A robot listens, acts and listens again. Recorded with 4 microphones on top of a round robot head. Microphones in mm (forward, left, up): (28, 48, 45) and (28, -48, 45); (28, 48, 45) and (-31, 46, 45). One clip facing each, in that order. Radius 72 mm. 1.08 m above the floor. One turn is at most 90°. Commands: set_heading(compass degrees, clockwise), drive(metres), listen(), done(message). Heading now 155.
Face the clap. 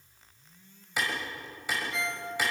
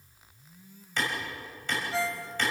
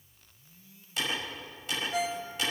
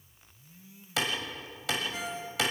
set_heading(65)
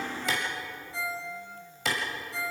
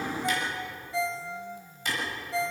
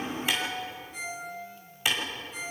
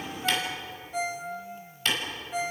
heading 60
set_heading(340)
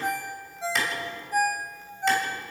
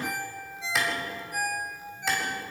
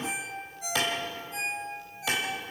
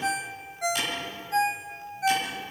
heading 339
done("Facing the clap.")